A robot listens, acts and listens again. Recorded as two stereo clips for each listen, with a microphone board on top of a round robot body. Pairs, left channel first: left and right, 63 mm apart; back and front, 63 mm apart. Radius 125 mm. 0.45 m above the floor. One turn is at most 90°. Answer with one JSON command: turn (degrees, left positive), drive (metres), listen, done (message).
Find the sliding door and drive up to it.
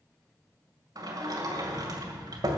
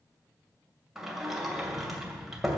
{"turn": -85}
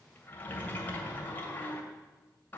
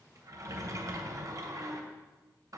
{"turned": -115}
{"turn": 30}
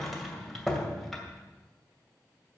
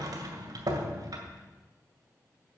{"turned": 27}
{"drive": 1.0}
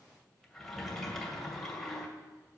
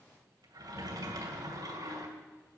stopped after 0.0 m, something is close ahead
{"done": "Something is in my way. I am facing the sliding door but have not reached it."}